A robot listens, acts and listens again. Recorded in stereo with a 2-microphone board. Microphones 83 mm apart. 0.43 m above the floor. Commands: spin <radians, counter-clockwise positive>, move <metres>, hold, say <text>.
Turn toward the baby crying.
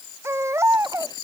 spin -0.52
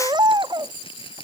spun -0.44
spin -2.18
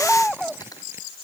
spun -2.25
say Found it: a baby crying, straight ahead.